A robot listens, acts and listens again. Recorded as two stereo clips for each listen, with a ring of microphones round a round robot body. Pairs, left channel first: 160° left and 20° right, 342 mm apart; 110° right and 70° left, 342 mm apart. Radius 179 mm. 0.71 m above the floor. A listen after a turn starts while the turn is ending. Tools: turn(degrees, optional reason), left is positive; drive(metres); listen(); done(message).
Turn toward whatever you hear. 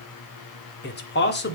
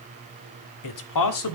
turn(degrees=-145, reason="The man speaking: 145° right.")
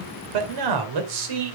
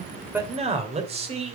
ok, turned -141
done("Found it: a man speaking, straight ahead, 2 to 4 m away.")